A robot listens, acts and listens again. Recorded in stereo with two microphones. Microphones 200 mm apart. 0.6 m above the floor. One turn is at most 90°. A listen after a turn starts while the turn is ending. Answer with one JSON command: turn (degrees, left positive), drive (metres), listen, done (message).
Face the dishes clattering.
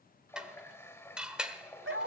{"turn": -30}
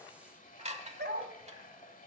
{"turn": -90}
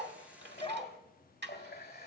{"turn": -65}
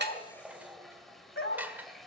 {"turn": -10}
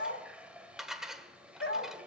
{"done": "Facing the dishes clattering, 1 to 2 m away."}